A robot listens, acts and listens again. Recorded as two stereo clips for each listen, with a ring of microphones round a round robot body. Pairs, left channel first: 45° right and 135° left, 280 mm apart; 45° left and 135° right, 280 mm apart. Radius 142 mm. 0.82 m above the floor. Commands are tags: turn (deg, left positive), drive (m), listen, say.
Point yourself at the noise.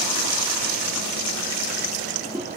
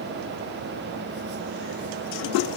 <listen/>
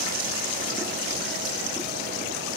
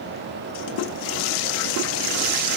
<listen/>
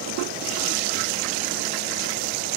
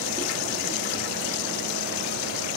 <say>I can't make out anything to turn to.</say>